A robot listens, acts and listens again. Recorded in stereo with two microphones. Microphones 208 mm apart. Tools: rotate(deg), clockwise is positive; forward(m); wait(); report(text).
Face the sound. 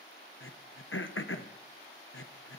rotate(-75)
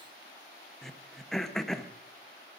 report("Facing the throat clearing, under 1 m away.")